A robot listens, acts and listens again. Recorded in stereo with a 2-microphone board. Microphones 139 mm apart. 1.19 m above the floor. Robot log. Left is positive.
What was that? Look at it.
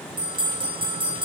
note: The bell: about 35° right or 145° right.
cmd yaw -35
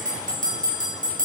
note: So it is at 105° right.
cmd yaw -105
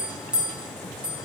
end: Found it: a bell, straight ahead.